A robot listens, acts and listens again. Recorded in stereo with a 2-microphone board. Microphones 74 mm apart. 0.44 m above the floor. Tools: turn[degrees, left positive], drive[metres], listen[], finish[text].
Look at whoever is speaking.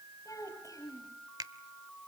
Thought: The child speaking: about 50° left or 130° left.
Action: turn[50]
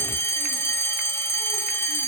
Action: listen[]
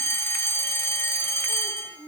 Thought: So it is at 80° left.
Action: turn[80]
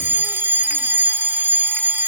Action: listen[]
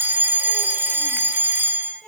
Thought: The child speaking is now 10° left.
Action: turn[10]
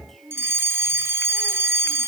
Action: finish[Found it: a child speaking, straight ahead.]